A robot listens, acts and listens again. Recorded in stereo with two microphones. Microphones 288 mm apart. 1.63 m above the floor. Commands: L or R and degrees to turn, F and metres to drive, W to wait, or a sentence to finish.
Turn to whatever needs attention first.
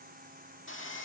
W
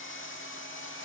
W
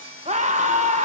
R25
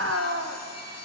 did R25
R130
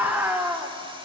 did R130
Found it: a scream, straight ahead, 1 to 2 m away.